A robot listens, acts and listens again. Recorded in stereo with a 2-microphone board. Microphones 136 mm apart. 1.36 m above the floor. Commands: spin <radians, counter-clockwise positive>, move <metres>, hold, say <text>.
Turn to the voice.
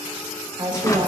spin -0.70
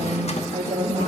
spin -1.75
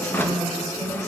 spin 0.52
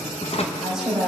say Found it: a woman speaking, straight ahead.